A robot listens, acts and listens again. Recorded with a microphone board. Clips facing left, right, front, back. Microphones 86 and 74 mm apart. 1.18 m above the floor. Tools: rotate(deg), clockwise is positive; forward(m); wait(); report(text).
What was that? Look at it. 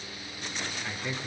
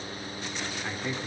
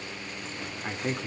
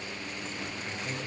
rotate(20)
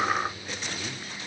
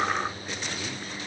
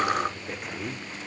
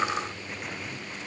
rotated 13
rotate(10)
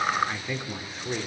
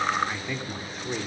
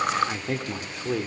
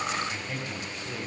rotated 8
report("Facing the man speaking, 2 to 4 m away.")